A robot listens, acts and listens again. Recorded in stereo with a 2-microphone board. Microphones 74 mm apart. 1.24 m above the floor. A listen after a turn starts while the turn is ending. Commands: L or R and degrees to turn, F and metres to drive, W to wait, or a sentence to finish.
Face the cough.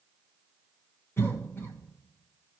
L35
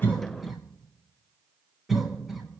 Facing the cough, 1 to 2 m away.